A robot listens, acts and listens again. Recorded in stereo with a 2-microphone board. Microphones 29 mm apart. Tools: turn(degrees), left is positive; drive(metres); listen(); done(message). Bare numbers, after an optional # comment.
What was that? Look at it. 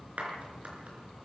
# The clap: about 55° right or 125° right.
turn(-55)
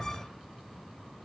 listen()
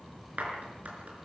# So it is at 70° right.
turn(-70)
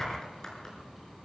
# The clap is now 25° left.
turn(25)
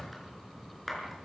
done("Facing the clap, over 4 m away.")